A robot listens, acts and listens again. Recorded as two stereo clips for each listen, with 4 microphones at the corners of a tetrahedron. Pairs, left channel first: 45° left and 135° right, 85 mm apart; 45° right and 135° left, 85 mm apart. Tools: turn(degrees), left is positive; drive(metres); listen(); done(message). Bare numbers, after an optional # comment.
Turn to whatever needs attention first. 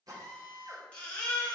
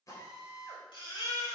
# The baby crying: 30° right.
turn(-30)
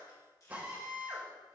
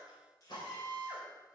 listen()
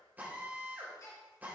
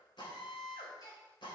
done("Found it: a baby crying, straight ahead.")